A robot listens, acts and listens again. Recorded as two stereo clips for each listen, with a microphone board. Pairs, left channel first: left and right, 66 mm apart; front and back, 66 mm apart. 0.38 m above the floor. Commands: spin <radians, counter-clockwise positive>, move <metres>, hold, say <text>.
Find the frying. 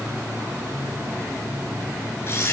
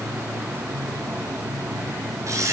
hold
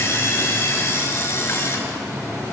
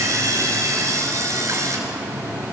hold
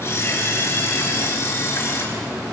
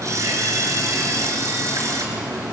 say I can't make out frying to turn to.